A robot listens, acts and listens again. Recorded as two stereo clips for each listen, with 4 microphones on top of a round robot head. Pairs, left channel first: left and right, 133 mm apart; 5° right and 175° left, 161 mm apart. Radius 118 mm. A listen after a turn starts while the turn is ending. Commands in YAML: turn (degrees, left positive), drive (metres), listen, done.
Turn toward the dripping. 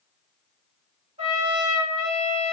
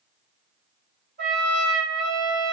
listen: true
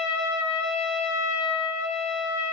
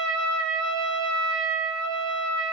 listen: true
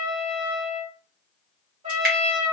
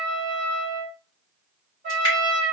turn: -75
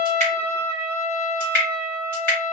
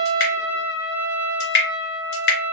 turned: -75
done: "Found it: dripping, straight ahead."